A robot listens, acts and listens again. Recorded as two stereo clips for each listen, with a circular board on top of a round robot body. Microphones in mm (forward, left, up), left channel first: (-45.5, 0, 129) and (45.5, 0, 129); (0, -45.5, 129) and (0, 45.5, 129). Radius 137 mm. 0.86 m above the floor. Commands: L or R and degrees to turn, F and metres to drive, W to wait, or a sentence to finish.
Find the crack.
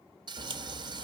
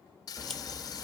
Found it: a crack, straight ahead.